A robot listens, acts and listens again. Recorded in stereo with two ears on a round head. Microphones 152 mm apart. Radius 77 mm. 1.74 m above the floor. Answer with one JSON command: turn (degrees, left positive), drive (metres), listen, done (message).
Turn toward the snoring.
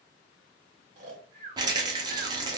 {"turn": -50}
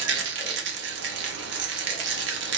{"listen": true}
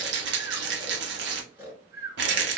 {"turn": -15}
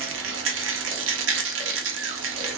{"listen": true}
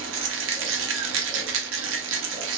{"listen": true}
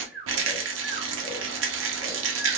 {"done": "Facing the snoring, 1 to 2 m away."}